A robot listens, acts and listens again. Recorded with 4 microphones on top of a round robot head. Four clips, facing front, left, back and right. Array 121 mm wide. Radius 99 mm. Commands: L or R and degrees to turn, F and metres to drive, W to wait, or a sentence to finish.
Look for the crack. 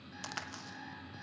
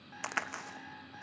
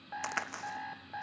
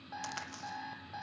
L125
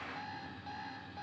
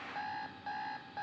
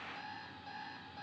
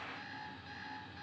I heard a crack from this way, but can't make it out now.